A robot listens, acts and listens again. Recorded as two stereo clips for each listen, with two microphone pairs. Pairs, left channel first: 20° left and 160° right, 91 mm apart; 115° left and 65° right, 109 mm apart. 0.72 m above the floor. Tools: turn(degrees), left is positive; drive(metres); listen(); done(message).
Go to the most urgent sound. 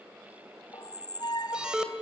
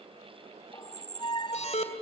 turn(degrees=120)
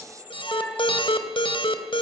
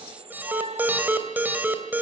drive(metres=1.0)
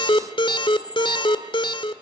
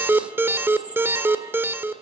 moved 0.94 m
drive(metres=1.0)
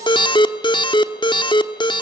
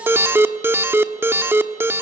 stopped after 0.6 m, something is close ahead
done("Arrived at the alarm, straight ahead.")